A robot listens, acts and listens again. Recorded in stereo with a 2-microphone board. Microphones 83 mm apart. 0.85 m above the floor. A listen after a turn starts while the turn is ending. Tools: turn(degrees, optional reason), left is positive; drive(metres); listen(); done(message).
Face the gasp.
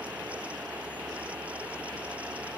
listen()
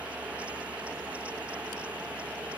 listen()
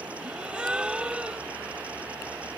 turn(degrees=-30)
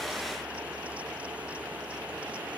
listen()
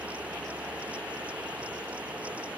done("I heard a gasp, but can't make it out now. It was about 20° left or 140° right.")